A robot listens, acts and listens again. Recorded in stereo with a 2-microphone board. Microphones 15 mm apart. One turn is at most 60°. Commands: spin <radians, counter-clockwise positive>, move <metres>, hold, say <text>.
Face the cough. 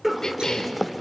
spin 0.52
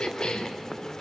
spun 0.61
spin 1.05
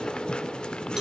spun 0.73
spin 1.05
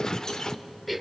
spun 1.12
say Facing the cough.